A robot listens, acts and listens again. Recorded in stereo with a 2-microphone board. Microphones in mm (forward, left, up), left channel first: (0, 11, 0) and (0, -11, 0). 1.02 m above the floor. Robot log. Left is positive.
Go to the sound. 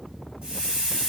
note: The hiss: about 55° right or 125° right.
cmd yaw -55
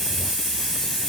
cmd fwd 1.0
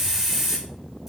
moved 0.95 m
note: The hiss is now 10° right.
cmd yaw -10
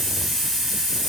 cmd fwd 1.0
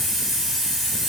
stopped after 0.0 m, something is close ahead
end: Arrived at the hiss, straight ahead.